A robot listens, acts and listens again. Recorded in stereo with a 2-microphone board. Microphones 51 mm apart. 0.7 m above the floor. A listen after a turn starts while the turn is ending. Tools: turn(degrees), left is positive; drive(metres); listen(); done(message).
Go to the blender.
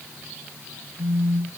listen()
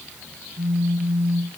listen()
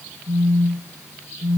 done("I can't make out a blender to turn to.")